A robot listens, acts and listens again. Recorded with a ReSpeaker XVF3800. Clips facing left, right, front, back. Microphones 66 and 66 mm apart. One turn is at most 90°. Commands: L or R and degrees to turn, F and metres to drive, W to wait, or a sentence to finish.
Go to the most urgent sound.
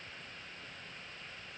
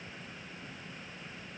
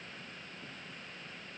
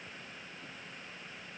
W
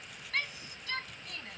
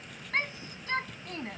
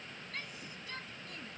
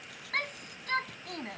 R90
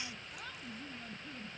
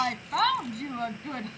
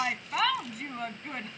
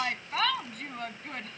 R85
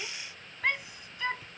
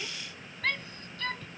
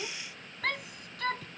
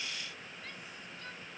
L15
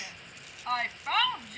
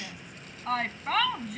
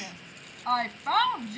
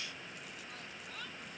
F1.0
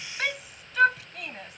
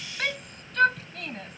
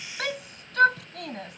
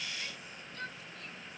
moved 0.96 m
F1.0
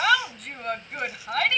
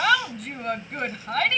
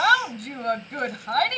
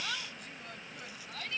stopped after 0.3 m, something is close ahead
Something is in my way. I am facing the shout but have not reached it.